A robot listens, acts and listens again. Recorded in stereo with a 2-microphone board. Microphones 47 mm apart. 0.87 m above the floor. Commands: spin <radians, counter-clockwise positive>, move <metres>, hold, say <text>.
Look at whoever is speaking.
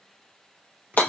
hold
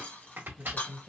spin -0.52
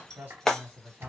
spin -2.44
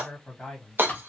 say Found it: a man speaking, straight ahead.